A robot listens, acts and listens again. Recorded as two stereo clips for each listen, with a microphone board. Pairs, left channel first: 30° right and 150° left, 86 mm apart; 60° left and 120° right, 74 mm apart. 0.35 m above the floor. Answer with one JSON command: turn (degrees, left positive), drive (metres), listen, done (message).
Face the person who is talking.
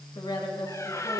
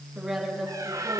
{"turn": -35}
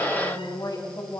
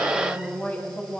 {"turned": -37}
{"done": "Facing the woman speaking, 2 to 4 m away."}